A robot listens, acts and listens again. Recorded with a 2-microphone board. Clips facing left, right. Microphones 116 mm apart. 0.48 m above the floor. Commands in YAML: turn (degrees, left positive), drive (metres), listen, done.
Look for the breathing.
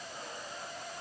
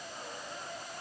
listen: true
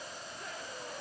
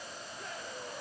listen: true
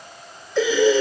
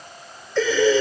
turn: 30
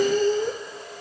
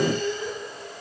turn: 135
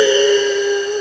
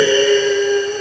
done: "Found it: breathing, straight ahead."